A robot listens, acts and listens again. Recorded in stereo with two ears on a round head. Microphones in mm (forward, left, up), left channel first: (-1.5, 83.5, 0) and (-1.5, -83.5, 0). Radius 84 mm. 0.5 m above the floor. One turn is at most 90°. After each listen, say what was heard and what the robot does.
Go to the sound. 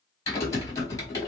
The typing on a keyboard: about 20° left or 160° left. Turn 20° left.
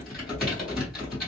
Drive 1.0 m forward.
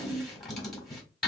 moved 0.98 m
Drive 1.0 m forward.
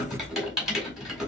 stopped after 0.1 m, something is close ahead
I am next to the typing on a keyboard.